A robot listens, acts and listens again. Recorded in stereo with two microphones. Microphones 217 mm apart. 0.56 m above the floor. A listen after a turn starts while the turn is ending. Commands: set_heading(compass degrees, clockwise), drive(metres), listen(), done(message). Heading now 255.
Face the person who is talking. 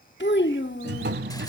set_heading(200)
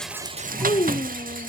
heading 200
set_heading(155)
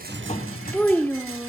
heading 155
set_heading(145)
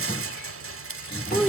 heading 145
done("Facing the child speaking.")